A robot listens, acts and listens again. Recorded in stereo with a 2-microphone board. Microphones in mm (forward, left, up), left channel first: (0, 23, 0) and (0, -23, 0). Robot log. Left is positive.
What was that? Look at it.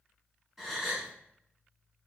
cmd yaw -30
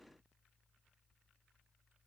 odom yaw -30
cmd idle
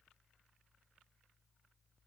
end: I heard a gasp, but can't make it out now. It was about 20° left or 140° right.